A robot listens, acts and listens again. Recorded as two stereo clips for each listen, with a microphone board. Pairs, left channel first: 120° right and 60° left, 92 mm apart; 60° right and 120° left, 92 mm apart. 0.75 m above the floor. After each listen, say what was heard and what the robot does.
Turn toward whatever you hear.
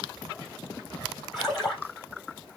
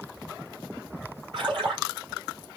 The splash: 150° left. Turn 150° left.
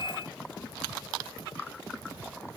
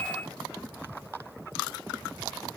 Facing where the splash came from. I can't hear it now.